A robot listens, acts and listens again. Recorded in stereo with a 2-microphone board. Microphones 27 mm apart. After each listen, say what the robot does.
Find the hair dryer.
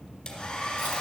Turn 30° left.
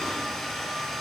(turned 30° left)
Found it: a hair dryer, straight ahead, 1 to 2 m away.